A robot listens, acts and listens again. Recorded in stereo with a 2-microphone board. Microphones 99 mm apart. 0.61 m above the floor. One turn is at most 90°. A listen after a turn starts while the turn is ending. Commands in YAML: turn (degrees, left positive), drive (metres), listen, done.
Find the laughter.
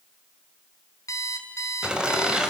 turn: -30
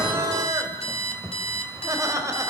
turn: -90
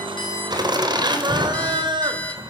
turn: -50
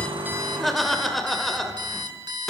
done: "Found it: laughter, straight ahead."